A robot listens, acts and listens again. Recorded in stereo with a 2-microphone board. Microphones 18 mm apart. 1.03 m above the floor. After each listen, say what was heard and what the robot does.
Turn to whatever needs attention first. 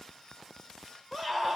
Turn 30° left.
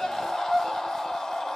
So it is at 145° left. Turn 145° left.
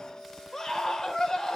The scream is now 35° left. Turn 35° left.
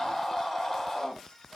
The scream is now 10° left. Turn 10° left.
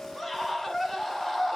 Found it: a scream, straight ahead.